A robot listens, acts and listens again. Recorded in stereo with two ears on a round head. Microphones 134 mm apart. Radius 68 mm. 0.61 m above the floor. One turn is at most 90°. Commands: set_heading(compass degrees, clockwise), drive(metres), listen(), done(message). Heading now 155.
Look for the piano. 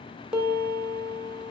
set_heading(185)
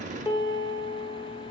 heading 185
set_heading(160)
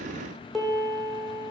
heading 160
done("Found it: a piano, straight ahead.")